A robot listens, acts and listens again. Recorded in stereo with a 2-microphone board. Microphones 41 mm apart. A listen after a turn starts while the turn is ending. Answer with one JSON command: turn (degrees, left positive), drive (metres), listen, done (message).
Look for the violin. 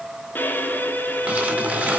{"turn": 55}
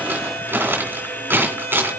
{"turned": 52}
{"turn": 75}
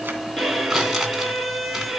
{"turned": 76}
{"done": "Found it: a violin, straight ahead."}